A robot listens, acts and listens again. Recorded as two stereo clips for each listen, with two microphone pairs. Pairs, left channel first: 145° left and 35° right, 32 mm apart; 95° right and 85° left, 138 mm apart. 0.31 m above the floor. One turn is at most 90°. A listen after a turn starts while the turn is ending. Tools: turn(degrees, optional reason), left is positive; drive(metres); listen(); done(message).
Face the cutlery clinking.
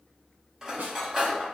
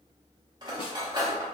turn(degrees=35, reason="The cutlery clinking: 35° left.")
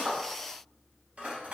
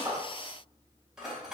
done("Facing the cutlery clinking, under 1 m away.")